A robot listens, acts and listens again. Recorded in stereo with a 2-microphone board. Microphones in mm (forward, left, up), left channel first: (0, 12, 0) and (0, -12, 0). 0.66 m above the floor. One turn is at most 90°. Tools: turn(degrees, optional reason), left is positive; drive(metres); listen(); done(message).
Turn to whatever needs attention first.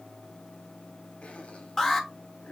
turn(degrees=30)
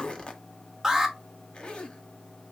turn(degrees=-15, reason="So it is at 15° right.")
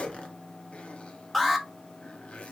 done("Facing the alarm, under 1 m away.")